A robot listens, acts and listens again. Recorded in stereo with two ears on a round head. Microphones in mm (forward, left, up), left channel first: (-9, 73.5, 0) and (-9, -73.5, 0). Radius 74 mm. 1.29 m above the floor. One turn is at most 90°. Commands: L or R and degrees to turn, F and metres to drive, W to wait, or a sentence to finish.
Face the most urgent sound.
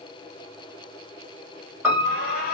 L60
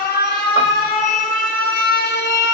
L60
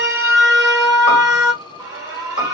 R20
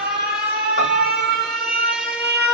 Facing the alarm, 1 to 2 m away.